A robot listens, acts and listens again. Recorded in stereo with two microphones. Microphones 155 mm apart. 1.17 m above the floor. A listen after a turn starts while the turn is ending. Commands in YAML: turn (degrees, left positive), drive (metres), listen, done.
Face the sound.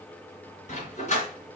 turn: 50
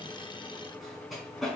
done: "Facing the dog barking."